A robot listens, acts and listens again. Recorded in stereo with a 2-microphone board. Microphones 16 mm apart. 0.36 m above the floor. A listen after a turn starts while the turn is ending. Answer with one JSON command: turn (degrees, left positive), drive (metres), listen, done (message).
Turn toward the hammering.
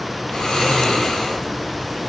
{"listen": true}
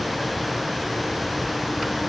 {"listen": true}
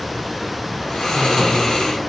{"done": "I can't make out hammering, only snoring."}